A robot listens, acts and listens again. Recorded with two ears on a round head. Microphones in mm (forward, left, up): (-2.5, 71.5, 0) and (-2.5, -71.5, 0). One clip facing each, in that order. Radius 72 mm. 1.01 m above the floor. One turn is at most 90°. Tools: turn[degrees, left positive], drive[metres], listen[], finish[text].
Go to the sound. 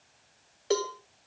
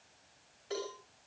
Action: turn[90]
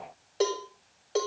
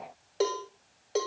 Action: drive[1.0]
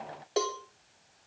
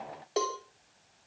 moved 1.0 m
Action: drive[1.0]
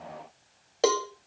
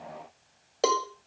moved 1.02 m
Action: drive[1.0]
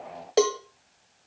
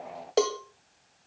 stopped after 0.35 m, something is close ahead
Action: finish[I am next to the cowbell.]